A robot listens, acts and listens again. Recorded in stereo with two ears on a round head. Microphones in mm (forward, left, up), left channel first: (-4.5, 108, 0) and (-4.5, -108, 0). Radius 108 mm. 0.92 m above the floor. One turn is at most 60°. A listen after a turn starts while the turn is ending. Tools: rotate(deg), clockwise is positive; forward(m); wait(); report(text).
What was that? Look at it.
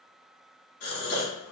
rotate(-60)
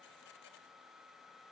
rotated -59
wait()
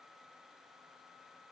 report("I heard a gasp, but can't make it out now. It was about straight ahead or 60° left.")